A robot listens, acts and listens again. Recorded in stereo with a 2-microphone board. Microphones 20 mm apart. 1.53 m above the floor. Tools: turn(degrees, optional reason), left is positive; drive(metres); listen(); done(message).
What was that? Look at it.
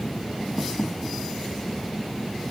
listen()
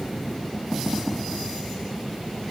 listen()
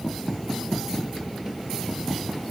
done("I can't make out anything.")